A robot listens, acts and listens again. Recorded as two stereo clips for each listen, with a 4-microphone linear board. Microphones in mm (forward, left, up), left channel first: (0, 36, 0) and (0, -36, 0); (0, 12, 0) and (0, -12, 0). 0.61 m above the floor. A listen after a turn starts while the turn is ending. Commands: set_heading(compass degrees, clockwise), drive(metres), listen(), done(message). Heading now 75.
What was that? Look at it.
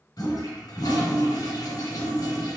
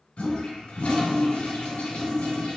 set_heading(10)
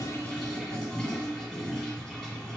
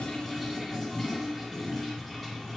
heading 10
set_heading(0)
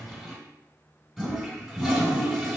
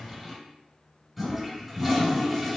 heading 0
done("Found it: a toilet flushing, straight ahead.")